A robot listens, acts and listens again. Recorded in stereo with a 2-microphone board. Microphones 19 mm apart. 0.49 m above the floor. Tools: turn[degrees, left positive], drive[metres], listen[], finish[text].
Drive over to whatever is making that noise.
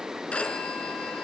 Thought: The phone ringing: about 70° left or 110° left.
Action: turn[70]
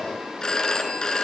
Thought: So it is at 40° left.
Action: turn[40]
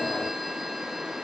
Action: listen[]
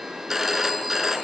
Thought: The phone ringing is now 15° right.
Action: turn[-15]
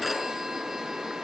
Action: drive[1.0]
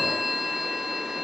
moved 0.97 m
Action: drive[1.0]
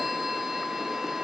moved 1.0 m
Action: drive[1.0]
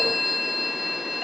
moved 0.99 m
Action: drive[1.0]
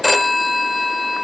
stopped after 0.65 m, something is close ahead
Action: finish[Arrived at the phone ringing, straight ahead.]